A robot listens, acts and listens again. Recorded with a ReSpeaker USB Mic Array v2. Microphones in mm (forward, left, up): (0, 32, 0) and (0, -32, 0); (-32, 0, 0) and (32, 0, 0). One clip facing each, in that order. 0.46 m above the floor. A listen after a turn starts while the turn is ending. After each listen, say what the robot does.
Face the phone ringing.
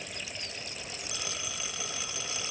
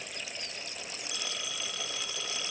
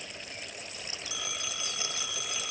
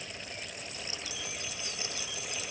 Turn 170° left.
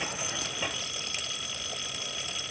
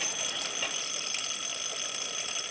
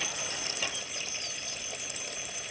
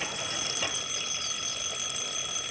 Found it: a phone ringing, straight ahead.